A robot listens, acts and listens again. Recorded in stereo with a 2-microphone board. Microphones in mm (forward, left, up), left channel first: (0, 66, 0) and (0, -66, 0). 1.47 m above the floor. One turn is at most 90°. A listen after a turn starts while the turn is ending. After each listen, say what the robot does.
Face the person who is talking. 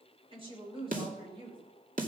Turn 40° right.
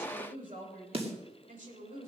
Turn 90° right.
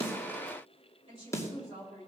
Turn 45° right.
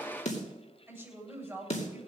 Turn 10° right.
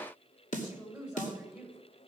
Facing the woman speaking, over 4 m away.